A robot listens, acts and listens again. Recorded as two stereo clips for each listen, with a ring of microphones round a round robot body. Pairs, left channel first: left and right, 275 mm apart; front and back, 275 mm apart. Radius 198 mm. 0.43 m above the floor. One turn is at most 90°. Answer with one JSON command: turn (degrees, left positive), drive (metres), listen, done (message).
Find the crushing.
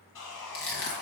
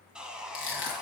{"turn": 45}
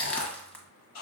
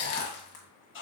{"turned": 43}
{"done": "Found it: crushing, straight ahead."}